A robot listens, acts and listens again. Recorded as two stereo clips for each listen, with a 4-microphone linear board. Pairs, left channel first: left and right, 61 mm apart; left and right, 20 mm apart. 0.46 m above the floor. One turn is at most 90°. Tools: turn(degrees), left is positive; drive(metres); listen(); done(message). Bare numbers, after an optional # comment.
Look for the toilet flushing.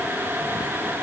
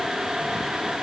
listen()
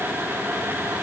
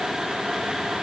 listen()
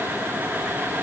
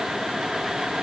done("I can't make out a toilet flushing to turn to.")